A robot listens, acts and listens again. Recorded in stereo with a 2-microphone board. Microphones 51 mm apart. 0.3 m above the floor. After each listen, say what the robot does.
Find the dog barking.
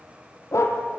Turn 70° left.
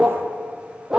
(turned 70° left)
Turn 15° right.
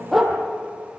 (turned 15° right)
Facing the dog barking.